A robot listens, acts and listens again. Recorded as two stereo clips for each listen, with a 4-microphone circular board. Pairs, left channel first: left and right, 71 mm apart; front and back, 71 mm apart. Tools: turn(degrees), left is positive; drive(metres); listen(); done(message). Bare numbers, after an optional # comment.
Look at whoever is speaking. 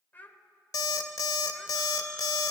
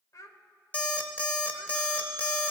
# The child speaking: 30° left.
turn(30)
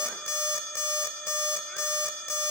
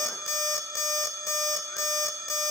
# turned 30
listen()
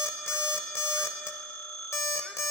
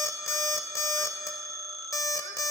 listen()
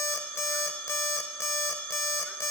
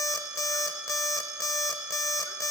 done("I heard a child speaking from this way, but can't make it out now.")